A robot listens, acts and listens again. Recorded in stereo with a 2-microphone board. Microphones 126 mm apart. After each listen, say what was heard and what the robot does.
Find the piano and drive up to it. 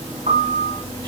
The piano: about 70° right or 110° right. Turn 70° right.
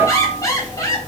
Keep listening.
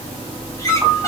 So it is at 25° right. Turn 25° right.
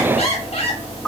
The piano is now 10° left. Turn 10° left.
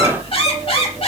Keep listening.
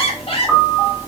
Drive 1.0 m forward.
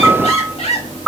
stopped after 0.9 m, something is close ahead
Arrived at the piano, straight ahead.